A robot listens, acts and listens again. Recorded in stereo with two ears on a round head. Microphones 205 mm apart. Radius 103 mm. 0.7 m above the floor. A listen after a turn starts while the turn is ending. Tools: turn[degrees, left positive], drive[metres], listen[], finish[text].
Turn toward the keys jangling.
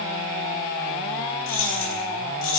Action: turn[90]
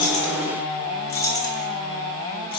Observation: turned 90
Thought: So it is at 15° left.
Action: turn[15]
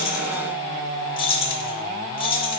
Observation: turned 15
Thought: The keys jangling is now 25° left.
Action: turn[25]
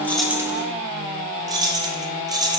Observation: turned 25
Thought: The keys jangling is now 15° right.
Action: turn[-15]
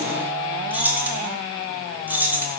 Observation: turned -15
Action: finish[Facing the keys jangling, 1 to 2 m away.]